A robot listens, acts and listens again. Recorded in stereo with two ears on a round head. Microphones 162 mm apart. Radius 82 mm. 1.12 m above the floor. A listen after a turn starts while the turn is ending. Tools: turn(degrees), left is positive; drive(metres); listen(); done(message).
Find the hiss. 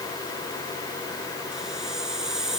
turn(degrees=-30)
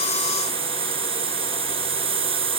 turn(degrees=-145)
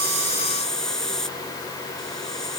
done("Found it: a hiss, straight ahead.")